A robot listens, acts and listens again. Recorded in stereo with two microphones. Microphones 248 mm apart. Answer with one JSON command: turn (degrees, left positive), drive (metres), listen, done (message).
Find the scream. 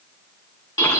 {"listen": true}
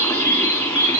{"listen": true}
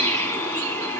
{"done": "I can't make out a scream to turn to."}